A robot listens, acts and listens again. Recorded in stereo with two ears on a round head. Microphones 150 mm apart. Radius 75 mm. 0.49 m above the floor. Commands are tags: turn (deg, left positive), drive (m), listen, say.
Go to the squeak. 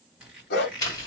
<turn deg="-30"/>
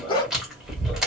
<listen/>
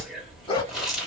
<listen/>
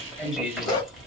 <say>I heard a squeak, but can't make it out now. It was about 25° left or 145° right. I did not reach it.</say>